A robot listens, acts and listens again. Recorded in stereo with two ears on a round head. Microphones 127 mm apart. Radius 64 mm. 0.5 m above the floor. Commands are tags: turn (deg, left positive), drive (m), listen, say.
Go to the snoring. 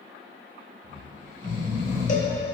<turn deg="60"/>
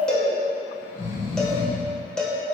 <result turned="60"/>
<turn deg="55"/>
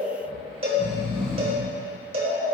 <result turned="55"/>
<drive m="1.0"/>
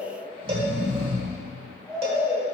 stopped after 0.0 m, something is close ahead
<turn deg="10"/>
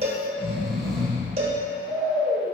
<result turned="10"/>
<say>Blocked. The snoring is further on, straight ahead.</say>